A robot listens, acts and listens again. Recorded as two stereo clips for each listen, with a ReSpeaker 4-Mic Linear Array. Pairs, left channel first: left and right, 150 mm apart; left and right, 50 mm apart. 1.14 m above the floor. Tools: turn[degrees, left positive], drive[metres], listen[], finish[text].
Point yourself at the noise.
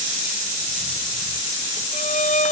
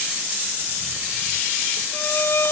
Thought: The violin: about 50° left or 130° left.
Action: turn[50]
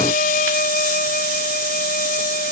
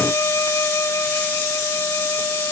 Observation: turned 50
Thought: So it is at 80° left.
Action: turn[80]
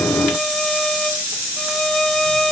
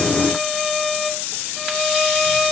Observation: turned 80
Action: finish[Found it: a violin, straight ahead.]